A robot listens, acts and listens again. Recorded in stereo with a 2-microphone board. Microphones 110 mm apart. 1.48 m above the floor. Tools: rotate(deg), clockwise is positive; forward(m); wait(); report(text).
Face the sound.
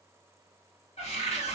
rotate(-90)
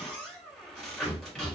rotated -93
report("Facing the cupboard door, 1 to 2 m away.")